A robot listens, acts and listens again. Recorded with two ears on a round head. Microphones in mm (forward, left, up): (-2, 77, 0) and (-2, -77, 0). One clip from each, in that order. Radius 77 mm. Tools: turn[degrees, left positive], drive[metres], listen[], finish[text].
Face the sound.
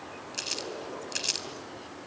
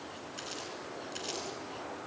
Thought: The crumpling: about 55° left or 125° left.
Action: turn[55]
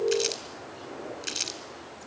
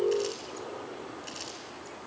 Thought: So it is at 65° left.
Action: turn[65]
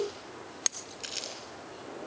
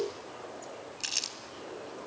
Thought: The crumpling is now 25° right.
Action: turn[-25]
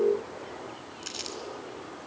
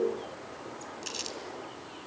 Action: finish[Found it: crumpling, straight ahead, 2 to 4 m away.]